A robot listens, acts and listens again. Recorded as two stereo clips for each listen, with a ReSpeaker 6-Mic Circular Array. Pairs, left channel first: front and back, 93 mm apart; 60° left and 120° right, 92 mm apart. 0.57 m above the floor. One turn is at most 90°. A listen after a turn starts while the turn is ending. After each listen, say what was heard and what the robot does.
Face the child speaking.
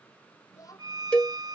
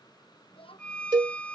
The child speaking: 50° left. Turn 50° left.
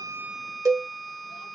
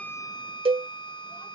Keep listening.
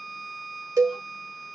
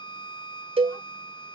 Keep listening.
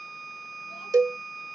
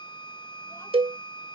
I heard a child speaking from this way, but can't make it out now.